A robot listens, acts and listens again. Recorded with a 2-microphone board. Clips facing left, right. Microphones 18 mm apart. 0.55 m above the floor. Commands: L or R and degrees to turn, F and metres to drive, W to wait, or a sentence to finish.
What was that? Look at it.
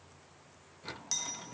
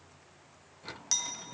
R25
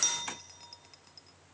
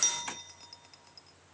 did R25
Found it: a clink, straight ahead.